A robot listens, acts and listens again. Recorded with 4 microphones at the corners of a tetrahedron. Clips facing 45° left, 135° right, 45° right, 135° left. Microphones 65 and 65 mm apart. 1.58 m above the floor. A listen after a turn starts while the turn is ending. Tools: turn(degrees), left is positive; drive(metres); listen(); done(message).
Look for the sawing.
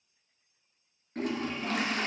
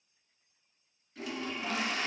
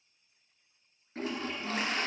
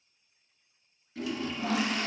turn(degrees=135)
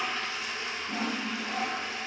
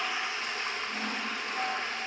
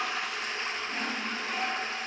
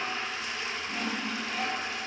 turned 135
turn(degrees=35)
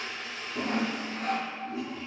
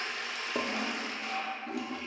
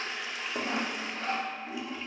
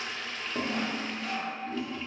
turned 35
turn(degrees=10)
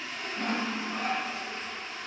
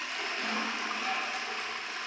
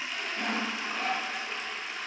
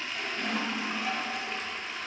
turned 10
done("Facing the sawing, under 1 m away.")